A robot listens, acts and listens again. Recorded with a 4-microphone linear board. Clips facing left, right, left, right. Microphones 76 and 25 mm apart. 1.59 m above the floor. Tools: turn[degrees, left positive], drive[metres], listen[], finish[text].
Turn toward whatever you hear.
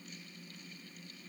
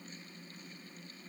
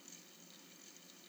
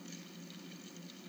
Action: listen[]
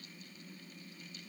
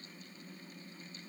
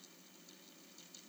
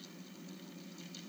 Action: listen[]
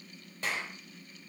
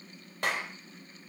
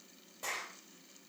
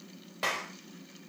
Thought: The clap: about 70° right or 110° right.
Action: turn[-70]
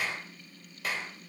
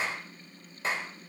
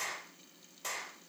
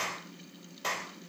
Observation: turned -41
Thought: So it is at 30° right.
Action: turn[-30]
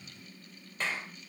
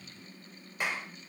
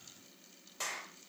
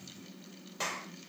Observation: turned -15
Thought: The clap is now 15° right.
Action: turn[-15]
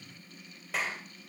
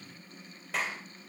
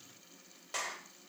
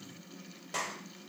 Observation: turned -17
Action: finish[Facing the clap, over 4 m away.]